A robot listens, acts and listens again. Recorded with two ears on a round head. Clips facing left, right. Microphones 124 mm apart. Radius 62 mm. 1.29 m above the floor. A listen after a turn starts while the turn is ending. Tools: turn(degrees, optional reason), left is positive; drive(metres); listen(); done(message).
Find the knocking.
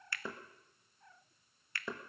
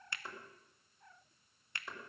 turn(degrees=70, reason="The knocking: about 70° left or 110° left.")
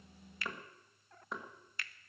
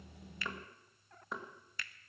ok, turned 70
done("Facing the knocking.")